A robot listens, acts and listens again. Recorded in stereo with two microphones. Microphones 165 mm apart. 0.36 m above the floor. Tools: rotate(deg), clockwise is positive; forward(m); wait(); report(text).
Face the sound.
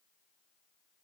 wait()
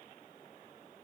wait()
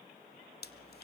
rotate(-90)
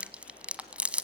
report("Facing the chewing, 1 to 2 m away.")